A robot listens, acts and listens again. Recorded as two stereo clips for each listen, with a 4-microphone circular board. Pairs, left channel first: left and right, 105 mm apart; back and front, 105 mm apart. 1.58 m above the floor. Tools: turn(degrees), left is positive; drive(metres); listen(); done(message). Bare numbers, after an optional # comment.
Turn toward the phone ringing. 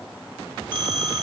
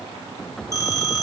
# The phone ringing: 125° right.
turn(-125)
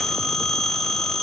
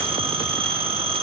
done("Facing the phone ringing, 1 to 2 m away.")